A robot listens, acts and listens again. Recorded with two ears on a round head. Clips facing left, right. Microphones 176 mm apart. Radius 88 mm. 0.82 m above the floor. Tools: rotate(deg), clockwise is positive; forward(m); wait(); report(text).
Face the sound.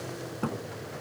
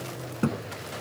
rotate(25)
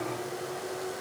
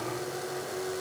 wait()
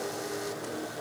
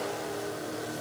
report("I heard a thud, but can't make it out now. It was about straight ahead or 130° right.")